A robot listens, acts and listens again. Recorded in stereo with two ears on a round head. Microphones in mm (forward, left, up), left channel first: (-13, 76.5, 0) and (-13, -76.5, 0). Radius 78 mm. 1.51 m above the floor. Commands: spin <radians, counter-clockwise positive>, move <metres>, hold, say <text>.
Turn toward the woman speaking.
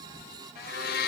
hold
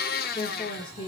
spin 0.44
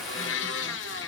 hold
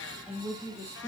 spin -0.26
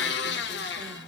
hold
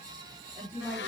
spin -0.17
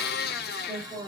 say Facing the woman speaking.